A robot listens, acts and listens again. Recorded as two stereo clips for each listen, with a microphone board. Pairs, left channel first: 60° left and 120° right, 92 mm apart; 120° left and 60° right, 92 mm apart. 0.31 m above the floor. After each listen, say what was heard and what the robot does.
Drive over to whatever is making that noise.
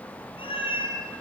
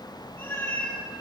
The cat meowing: 55° left. Turn 55° left.
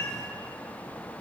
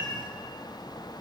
Drive 1.0 m forward.
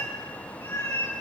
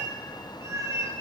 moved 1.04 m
Drive 1.0 m forward.
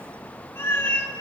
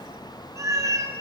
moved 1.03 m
Drive 1.0 m forward.
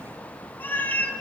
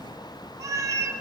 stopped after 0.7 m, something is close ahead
The cat meowing is now 10° right. Turn 10° right.
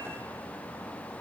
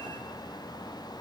Keep listening.
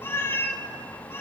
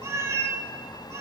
I am next to the cat meowing.